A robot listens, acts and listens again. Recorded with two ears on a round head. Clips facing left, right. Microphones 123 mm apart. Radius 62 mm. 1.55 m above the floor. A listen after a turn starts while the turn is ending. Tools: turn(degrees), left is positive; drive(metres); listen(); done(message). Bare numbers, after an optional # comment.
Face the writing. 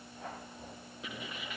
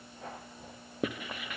# The writing: about 45° right or 135° right.
turn(-45)
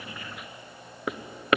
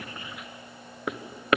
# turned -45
done("Found it: writing, straight ahead, 1 to 2 m away.")